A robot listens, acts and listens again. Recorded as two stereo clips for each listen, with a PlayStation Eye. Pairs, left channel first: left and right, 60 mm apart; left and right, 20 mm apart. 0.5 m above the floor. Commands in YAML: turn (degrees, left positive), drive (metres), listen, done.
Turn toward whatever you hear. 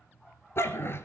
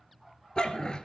turn: 40
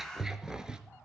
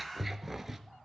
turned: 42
turn: -15
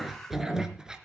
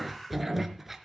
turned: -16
turn: -15
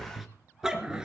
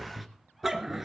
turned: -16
turn: -15
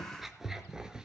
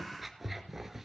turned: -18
turn: -10
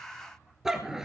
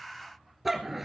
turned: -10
turn: -10
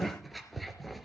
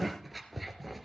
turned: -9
done: "Facing the dog barking, 2 to 4 m away."